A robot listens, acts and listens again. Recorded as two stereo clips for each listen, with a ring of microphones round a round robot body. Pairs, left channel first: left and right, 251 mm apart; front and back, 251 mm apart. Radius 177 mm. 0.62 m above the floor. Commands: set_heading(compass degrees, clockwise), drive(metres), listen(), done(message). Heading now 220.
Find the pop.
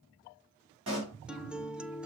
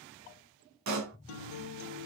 set_heading(25)
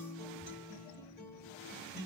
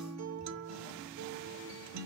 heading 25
done("Facing where the pop came from. I can't hear it now.")